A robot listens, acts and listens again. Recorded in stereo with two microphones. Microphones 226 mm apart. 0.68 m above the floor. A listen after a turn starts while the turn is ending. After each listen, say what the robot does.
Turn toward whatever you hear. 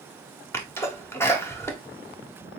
Turn 30° left.
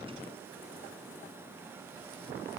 Keep listening.
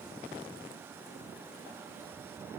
I heard a sneeze, but can't make it out now. It was about 20° right or 140° left.